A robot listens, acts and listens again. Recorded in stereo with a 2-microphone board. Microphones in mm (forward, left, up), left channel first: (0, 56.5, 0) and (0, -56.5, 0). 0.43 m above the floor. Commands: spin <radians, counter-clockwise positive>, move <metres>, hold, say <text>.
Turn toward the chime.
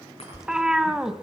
spin 1.05
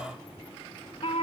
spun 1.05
hold
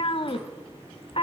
hold
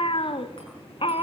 say I heard a chime, but can't make it out now. It was about straight ahead or 60° left.